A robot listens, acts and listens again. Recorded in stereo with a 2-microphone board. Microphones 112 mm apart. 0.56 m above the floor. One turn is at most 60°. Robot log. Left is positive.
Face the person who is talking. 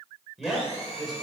cmd yaw -30
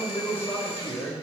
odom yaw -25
note: So it is at 20° left.
cmd yaw +20
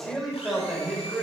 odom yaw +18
end: Found it: a man speaking, straight ahead, 2 to 4 m away.